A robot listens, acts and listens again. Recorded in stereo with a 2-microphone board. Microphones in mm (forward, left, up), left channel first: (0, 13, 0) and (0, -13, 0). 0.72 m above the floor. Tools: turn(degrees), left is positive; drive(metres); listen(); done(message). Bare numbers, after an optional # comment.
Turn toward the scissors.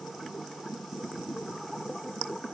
listen()
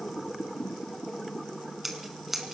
turn(-30)
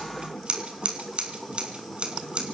# So it is at 140° right.
turn(-140)
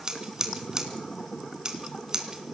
# The scissors is now 30° right.
turn(-30)
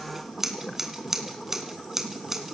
# The scissors is now 15° right.
turn(-15)
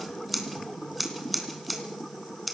done("Found it: scissors, straight ahead, 2 to 4 m away.")